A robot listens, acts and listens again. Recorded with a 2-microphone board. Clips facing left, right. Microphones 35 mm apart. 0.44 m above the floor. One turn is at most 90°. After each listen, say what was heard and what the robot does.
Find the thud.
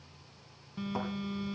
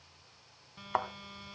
The thud: about 65° right or 115° right. Turn 65° right.
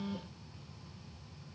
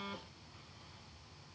Keep listening.
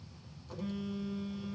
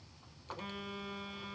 I heard a thud, but can't make it out now. It was about straight ahead or 50° right.